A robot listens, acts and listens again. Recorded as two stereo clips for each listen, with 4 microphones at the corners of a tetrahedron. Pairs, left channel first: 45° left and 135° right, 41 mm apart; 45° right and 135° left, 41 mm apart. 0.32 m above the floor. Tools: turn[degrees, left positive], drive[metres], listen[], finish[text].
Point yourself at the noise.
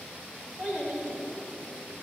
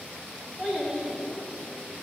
Thought: The child speaking: 165° right.
Action: turn[-165]
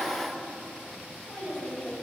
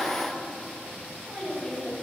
Thought: The child speaking is now 25° left.
Action: turn[25]
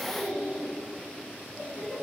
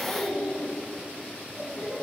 Action: finish[Found it: a child speaking, straight ahead.]